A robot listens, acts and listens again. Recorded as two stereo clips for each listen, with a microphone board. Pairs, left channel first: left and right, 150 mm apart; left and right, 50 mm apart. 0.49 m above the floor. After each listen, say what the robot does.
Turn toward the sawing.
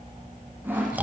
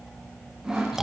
Turn 30° right.
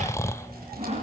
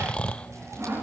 Turn 135° right.
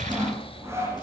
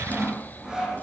Turn 15° right.
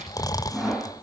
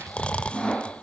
Found it: sawing, straight ahead.